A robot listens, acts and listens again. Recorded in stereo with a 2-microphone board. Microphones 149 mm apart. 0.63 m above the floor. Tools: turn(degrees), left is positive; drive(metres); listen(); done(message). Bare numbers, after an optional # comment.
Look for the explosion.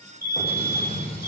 # The explosion: about 40° left or 140° left.
turn(40)
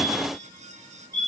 listen()
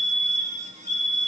done("I heard an explosion, but can't make it out now. It was about straight ahead or 100° left.")